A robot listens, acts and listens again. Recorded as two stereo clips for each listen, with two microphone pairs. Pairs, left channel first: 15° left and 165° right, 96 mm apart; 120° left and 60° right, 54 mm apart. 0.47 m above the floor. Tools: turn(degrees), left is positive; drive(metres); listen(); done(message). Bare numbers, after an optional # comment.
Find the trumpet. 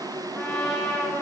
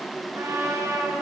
# The trumpet: 55° right.
turn(-55)
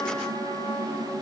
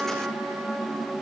done("Facing the trumpet, over 4 m away.")